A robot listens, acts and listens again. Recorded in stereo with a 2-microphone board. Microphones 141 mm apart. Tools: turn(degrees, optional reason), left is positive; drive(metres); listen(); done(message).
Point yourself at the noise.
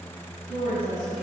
turn(degrees=60, reason="The woman speaking: about 60° left or 120° left.")
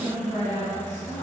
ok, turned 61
turn(degrees=60, reason="So it is at 60° left.")
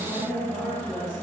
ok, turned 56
turn(degrees=25, reason="The woman speaking is now 25° left.")
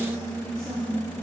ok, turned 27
turn(degrees=10, reason="The woman speaking is now 10° left.")
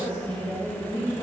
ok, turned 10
done("Facing the woman speaking.")